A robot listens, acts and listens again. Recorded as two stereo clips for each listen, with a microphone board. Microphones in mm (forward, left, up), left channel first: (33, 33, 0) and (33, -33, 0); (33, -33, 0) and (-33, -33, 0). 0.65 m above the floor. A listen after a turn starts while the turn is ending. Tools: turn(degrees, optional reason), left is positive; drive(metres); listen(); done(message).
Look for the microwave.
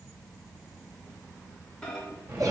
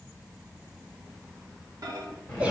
turn(degrees=170, reason="The microwave: 170° left.")
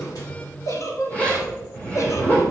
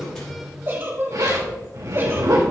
listen()
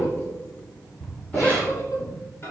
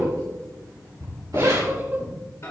turn(degrees=40, reason="The microwave is now 40° left.")
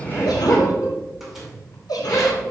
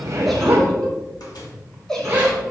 done("Facing the microwave.")